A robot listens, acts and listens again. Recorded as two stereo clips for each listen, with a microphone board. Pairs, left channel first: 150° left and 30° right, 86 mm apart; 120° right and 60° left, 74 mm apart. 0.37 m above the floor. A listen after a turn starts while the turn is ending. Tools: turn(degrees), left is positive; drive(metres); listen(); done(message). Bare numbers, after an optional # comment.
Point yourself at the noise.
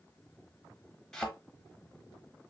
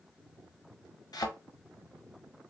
# The thud: 130° right.
turn(-130)
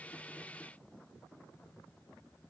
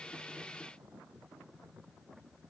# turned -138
# Nothing new. It was at 10° left.
turn(10)
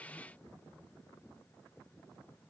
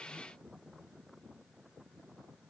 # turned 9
done("Facing where the thud came from. I can't hear it now.")